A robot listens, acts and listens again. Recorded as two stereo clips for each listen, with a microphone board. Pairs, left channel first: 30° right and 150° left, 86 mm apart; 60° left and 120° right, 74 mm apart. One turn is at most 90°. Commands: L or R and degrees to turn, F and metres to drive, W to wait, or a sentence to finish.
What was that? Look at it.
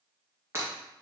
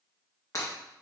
L90
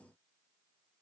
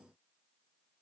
Facing where the breaking glass came from. I can't hear it now.